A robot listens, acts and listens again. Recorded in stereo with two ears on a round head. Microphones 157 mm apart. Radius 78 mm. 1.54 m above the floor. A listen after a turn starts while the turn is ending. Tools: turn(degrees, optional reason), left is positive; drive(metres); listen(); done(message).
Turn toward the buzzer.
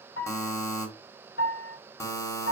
turn(degrees=15, reason="The buzzer: about 15° left or 165° left.")
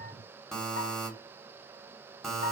done("Facing the buzzer.")